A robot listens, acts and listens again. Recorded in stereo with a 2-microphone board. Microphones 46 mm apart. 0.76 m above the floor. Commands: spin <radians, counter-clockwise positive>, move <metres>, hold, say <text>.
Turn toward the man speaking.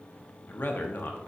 spin 0.79
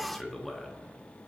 say Found it: a man speaking, straight ahead.